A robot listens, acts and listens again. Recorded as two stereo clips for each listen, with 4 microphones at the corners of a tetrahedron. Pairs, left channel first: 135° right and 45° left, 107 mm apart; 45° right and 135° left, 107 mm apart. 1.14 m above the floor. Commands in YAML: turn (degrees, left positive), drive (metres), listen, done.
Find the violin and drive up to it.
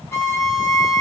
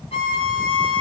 turn: -70
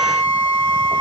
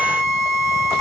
drive: 1.0
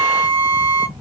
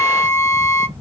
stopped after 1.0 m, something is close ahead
done: "Arrived at the violin, straight ahead."